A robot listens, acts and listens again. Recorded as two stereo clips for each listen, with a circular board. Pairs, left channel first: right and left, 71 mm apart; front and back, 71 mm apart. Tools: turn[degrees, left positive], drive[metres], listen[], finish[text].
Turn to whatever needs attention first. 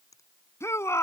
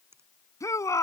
Thought: The shout: 45° right.
Action: turn[-45]
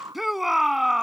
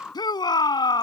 Action: finish[Facing the shout.]